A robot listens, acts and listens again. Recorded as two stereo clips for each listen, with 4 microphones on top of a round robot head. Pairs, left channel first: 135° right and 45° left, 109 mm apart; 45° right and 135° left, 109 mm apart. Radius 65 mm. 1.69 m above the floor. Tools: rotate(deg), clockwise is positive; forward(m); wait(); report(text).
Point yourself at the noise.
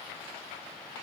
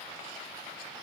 wait()
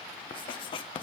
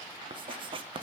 rotate(-180)
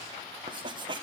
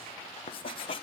report("Facing the writing.")